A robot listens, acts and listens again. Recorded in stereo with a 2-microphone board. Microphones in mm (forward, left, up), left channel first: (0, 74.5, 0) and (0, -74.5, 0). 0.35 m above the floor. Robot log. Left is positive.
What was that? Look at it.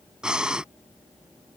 cmd yaw -30
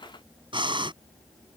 note: So it is at 145° right.
cmd yaw -145
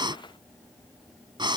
note: The breathing is now 35° right.
cmd yaw -35
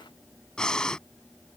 end: Found it: breathing, straight ahead.